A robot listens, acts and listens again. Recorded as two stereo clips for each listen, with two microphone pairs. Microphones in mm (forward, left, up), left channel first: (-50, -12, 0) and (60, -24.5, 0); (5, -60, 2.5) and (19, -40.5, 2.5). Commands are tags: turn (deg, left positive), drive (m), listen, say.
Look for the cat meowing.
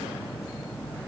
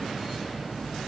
<listen/>
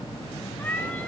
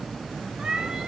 <turn deg="95"/>
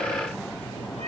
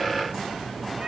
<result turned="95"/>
<listen/>
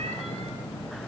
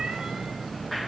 <listen/>
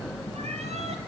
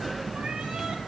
<say>Facing where the cat meowing came from. I can't hear it now.</say>